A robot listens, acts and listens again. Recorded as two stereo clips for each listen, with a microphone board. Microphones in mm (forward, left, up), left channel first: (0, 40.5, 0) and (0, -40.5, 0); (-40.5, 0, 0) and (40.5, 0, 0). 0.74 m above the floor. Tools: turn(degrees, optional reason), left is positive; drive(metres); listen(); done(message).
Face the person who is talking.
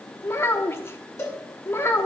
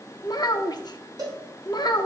turn(degrees=150, reason="The child speaking: 150° left.")
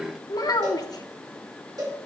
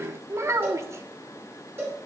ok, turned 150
turn(degrees=55, reason="The child speaking is now 55° left.")
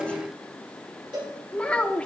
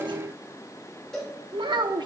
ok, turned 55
turn(degrees=15, reason="The child speaking is now 15° left.")
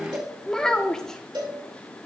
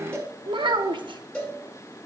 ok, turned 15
turn(degrees=10, reason="The child speaking is now 10° left.")
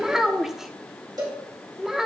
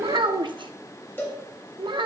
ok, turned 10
done("Facing the child speaking.")